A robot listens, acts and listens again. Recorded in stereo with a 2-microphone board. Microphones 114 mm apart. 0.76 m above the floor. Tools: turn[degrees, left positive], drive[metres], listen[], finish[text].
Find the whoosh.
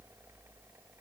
Action: listen[]
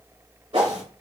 Thought: The whoosh: about 55° right or 125° right.
Action: turn[-55]
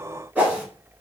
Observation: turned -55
Thought: So it is at 20° right.
Action: turn[-20]
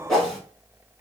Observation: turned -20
Action: finish[Facing the whoosh.]